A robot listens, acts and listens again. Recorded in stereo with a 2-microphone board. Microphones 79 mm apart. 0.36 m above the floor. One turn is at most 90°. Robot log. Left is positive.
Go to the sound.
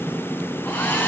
note: The hair dryer: about 25° left or 155° left.
cmd yaw +25
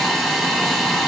cmd fwd 1.0
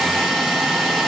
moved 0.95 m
cmd fwd 1.0
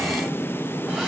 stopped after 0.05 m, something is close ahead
cmd idle
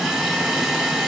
end: Arrived at the hair dryer, straight ahead.